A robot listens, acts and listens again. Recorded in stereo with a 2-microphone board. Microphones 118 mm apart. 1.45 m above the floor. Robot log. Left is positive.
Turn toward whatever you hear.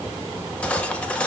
cmd yaw +30
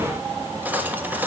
note: So it is at 15° right.
cmd yaw -15
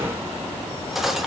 end: Found it: cutlery clinking, straight ahead, 1 to 2 m away.